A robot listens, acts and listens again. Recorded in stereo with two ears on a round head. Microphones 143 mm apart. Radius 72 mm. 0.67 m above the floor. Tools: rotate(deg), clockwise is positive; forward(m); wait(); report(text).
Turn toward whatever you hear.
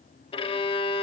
rotate(-35)
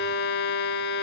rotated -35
rotate(-110)
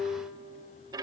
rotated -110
rotate(25)
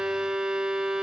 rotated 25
report("Found it: a violin, straight ahead, under 1 m away.")